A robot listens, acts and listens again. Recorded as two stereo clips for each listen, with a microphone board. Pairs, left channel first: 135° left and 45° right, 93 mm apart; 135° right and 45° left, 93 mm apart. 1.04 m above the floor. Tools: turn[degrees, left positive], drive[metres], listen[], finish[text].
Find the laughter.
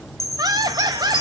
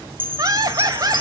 Action: finish[Facing the laughter.]